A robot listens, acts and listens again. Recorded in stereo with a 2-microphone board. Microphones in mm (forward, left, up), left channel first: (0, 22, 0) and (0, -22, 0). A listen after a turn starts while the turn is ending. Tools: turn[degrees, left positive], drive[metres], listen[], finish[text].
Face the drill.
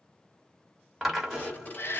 Action: turn[-30]
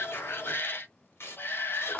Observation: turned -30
Thought: So it is at 25° left.
Action: turn[25]
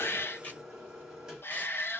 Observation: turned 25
Thought: The drill is now 10° right.
Action: turn[-10]
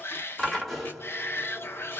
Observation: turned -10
Action: finish[Facing the drill, 1 to 2 m away.]